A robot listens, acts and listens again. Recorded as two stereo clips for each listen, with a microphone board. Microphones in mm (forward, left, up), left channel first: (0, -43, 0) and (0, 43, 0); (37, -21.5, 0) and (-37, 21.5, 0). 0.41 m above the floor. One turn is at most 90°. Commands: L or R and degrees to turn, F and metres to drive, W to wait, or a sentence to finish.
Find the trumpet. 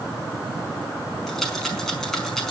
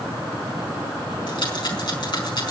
W
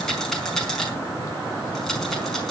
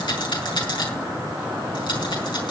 W
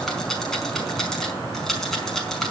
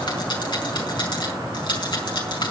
I can't make out a trumpet to turn to.